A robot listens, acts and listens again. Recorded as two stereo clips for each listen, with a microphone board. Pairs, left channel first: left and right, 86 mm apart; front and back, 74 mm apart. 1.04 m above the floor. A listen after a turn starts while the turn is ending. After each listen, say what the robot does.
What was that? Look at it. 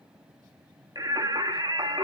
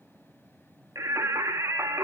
Turn 125° right.
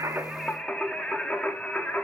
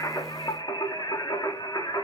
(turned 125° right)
Turn 15° left.
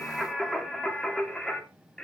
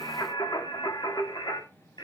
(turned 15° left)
Turn 10° left.
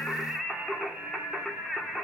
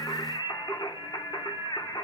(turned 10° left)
Facing the singing.